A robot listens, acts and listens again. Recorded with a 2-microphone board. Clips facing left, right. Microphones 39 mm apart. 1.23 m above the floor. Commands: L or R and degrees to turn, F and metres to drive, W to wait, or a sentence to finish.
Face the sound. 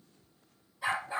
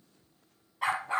R65
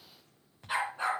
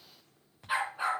R10
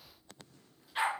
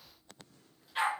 Found it: a dog barking, straight ahead, 2 to 4 m away.